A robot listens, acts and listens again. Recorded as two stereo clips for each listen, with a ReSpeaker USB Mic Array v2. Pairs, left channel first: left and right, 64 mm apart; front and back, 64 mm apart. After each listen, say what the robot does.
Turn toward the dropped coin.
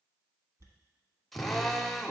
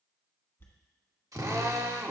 Turn 55° right.
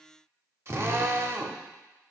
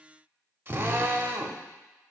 I heard a dropped coin from this way, but can't make it out now.